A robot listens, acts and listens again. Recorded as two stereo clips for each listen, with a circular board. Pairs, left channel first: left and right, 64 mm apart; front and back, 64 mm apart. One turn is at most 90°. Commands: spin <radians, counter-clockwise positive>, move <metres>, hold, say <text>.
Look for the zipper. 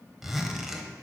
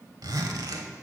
spin -1.57
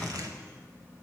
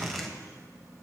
spin -1.48
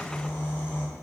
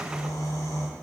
hold
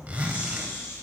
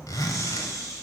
spin -0.35
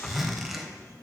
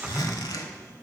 say Found it: a zipper, straight ahead.